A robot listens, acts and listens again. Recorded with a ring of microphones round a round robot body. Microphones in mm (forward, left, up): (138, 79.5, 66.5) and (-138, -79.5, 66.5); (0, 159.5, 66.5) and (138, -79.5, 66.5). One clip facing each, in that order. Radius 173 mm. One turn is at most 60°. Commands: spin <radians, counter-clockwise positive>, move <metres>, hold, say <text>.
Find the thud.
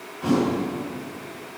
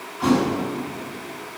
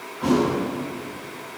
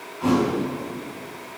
spin -1.05
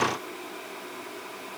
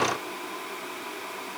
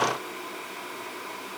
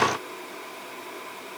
spin -1.05
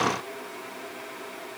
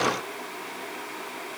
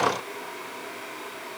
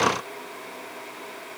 spin -0.79
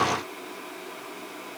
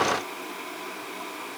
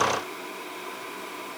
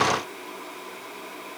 say Facing where the thud came from. I can't hear it now.